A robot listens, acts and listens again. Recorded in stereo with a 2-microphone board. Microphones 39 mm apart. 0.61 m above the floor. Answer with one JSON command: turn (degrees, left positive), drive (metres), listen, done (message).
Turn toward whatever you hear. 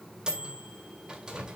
{"turn": -20}
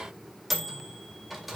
{"done": "Found it: a microwave, straight ahead."}